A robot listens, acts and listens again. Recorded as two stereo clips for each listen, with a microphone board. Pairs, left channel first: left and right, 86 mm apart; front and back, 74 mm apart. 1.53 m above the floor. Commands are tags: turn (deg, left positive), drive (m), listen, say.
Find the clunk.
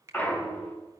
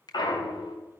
<turn deg="20"/>
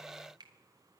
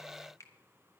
<say>I heard a clunk from this way, but can't make it out now.</say>